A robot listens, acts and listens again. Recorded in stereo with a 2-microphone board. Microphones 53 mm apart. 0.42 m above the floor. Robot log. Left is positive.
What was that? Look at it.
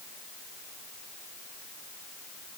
cmd idle
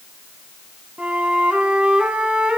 note: The flute: about 25° right or 155° right.
cmd yaw -25
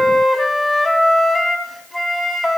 end: Facing the flute, under 1 m away.